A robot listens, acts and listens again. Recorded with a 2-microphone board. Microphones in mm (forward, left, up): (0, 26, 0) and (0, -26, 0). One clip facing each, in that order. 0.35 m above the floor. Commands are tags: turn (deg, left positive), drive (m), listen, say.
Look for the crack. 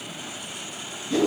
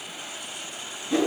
<listen/>
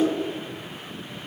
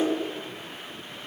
<listen/>
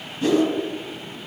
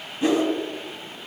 <say>I can't make out a crack, only a whoosh.</say>